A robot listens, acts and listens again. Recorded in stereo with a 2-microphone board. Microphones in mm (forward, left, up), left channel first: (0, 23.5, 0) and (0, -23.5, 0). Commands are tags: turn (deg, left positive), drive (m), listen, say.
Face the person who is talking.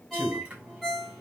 <turn deg="-50"/>
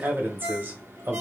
<turn deg="-65"/>
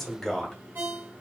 <say>Facing the man speaking.</say>